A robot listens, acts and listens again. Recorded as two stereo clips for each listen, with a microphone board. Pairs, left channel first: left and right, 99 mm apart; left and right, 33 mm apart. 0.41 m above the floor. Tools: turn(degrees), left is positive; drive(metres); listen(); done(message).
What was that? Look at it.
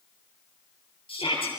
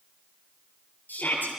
turn(degrees=65)
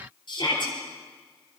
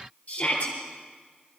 turn(degrees=50)
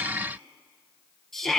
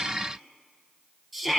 done("Found it: a shout, straight ahead.")